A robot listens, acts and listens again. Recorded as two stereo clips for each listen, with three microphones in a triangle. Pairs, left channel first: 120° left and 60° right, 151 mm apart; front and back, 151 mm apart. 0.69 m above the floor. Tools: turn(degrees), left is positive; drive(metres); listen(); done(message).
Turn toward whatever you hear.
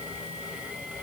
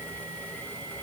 listen()
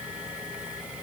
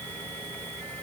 listen()
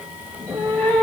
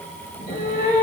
turn(degrees=40)
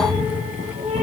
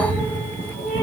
turn(degrees=-15)
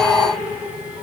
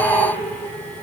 listen()
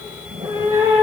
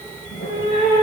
done("Found it: a cat meowing, straight ahead, over 4 m away.")